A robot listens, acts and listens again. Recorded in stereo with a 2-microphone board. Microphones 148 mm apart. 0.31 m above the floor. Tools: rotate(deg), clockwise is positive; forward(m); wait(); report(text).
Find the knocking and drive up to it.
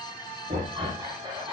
rotate(70)
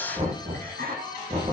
rotate(40)
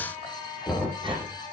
forward(1.0)
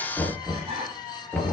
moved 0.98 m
forward(1.0)
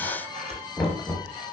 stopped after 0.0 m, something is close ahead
report("Blocked. The knocking is further on, straight ahead.")